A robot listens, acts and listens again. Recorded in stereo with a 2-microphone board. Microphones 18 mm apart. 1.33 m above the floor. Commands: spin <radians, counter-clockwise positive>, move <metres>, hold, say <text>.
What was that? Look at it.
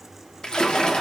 spin 0.79
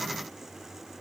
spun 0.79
hold
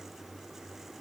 say I heard a splash, but can't make it out now. It was about straight ahead or 90° left.